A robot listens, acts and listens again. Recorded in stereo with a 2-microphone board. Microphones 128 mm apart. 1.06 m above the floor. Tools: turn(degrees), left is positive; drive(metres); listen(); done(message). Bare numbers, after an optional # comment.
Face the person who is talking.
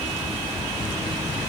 listen()
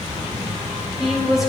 turn(30)
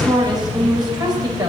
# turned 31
# So it is at 30° right.
turn(-30)
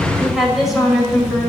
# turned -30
done("Facing the woman speaking.")